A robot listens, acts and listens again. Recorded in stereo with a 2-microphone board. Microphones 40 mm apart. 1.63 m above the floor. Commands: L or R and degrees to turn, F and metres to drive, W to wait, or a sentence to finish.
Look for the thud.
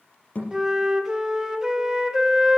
L35
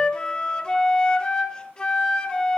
W
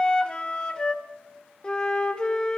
I heard a thud, but can't make it out now. It was about straight ahead or 110° left.